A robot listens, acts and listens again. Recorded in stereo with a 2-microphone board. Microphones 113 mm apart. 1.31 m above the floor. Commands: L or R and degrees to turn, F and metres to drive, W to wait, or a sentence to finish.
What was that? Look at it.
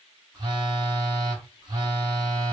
R35
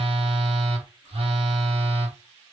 R100
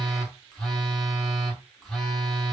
Facing the phone buzzing, 1 to 2 m away.